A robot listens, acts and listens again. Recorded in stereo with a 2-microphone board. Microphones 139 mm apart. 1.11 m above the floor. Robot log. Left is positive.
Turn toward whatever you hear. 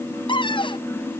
note: The cupboard door: about 35° left or 145° left.
cmd yaw +35
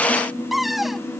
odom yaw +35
end: Found it: a cupboard door, straight ahead.